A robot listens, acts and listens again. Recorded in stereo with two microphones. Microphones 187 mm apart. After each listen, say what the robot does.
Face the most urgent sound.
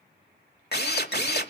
Keep listening.
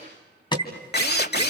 Turn 25° left.
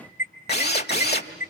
Turn 130° left.
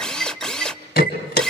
Turn 60° left.
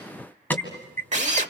Turn 10° left.
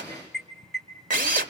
Facing the alarm.